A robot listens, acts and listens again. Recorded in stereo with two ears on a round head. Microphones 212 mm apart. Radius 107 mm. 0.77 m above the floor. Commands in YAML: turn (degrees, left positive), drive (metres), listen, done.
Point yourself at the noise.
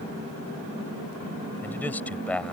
turn: 30
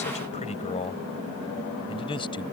turn: 160
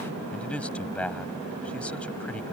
done: "Facing the man speaking."